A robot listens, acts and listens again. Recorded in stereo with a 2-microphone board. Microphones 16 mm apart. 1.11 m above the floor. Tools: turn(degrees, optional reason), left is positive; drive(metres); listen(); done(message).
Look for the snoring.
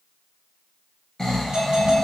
turn(degrees=40, reason="The snoring: about 40° left or 140° left.")
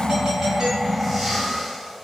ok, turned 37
turn(degrees=10, reason="So it is at 10° left.")
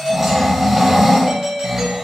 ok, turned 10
done("Found it: snoring, straight ahead.")